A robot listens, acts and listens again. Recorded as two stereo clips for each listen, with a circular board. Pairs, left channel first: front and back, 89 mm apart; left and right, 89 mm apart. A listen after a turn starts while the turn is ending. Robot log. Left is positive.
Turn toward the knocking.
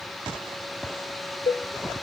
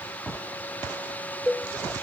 cmd idle
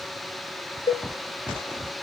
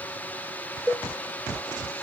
cmd idle
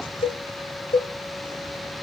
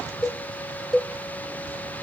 end: I can't make out knocking to turn to.